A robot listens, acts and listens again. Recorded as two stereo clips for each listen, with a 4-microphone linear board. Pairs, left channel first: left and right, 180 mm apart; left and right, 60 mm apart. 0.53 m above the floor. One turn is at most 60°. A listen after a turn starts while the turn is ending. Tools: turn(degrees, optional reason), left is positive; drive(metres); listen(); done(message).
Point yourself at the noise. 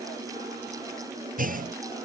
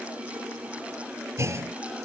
turn(degrees=-50, reason="The clunk: about 50° right or 130° right.")
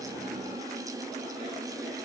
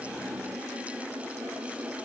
listen()
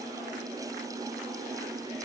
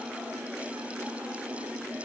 done("I heard a clunk, but can't make it out now. It was about straight ahead or 80° right.")